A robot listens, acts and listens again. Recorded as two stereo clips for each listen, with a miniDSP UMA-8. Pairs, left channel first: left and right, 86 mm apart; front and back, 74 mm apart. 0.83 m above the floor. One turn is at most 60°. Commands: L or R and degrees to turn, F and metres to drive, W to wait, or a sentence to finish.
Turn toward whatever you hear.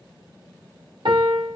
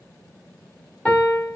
R60
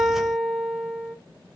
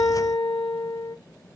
R15
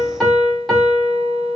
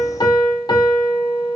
Found it: a piano, straight ahead, 1 to 2 m away.